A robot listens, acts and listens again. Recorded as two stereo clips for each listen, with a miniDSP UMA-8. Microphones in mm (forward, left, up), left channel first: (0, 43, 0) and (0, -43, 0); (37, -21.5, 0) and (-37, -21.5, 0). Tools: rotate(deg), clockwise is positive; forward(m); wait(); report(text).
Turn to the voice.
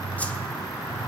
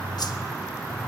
wait()
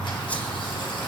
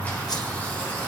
wait()
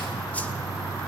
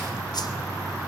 report("I can't make out anyone speaking, only a whoosh.")